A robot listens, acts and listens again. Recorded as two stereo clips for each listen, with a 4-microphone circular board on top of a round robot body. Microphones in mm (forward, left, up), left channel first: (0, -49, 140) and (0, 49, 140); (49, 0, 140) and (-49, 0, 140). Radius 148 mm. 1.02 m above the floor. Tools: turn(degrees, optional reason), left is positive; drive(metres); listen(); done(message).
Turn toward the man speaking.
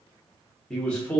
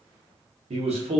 turn(degrees=-170, reason="The man speaking: 170° right.")
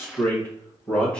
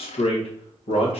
turn(degrees=-10, reason="The man speaking is now 10° right.")
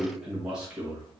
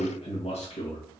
turn(degrees=15, reason="The man speaking is now 15° left.")
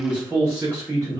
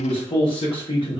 turn(degrees=25, reason="The man speaking is now 25° left.")
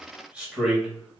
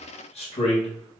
done("Found it: a man speaking, straight ahead.")